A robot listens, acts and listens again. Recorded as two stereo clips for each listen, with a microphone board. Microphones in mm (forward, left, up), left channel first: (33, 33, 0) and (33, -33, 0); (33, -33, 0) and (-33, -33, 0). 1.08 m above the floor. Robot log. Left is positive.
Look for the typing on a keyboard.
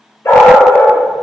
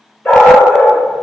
cmd idle
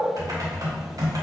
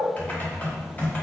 note: The typing on a keyboard: 65° right.
cmd yaw -65
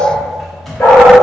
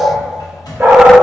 end: Found it: typing on a keyboard, straight ahead.